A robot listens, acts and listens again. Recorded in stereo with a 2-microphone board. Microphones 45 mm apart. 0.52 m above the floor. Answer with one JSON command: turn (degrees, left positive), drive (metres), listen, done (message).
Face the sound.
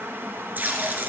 {"turn": -45}
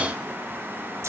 {"listen": true}
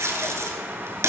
{"turn": -90}
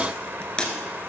{"turn": 20}
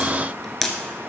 {"done": "Found it: tape being pulled, straight ahead, 1 to 2 m away."}